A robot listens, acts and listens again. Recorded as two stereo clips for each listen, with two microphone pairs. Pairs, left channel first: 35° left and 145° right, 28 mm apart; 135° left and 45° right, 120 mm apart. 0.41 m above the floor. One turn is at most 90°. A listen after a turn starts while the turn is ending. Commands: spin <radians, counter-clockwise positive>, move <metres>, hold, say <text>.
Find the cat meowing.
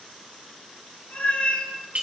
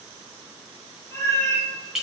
spin 1.13
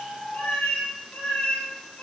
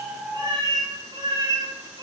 say Facing the cat meowing.